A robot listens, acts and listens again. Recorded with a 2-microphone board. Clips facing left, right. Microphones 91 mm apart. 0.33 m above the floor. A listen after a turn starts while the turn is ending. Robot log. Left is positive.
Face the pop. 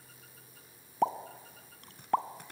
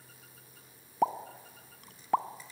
cmd yaw -30
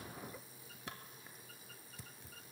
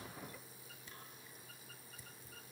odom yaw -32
cmd idle
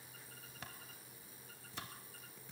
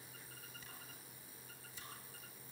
end: I heard a pop, but can't make it out now. It was about 30° left or 145° right.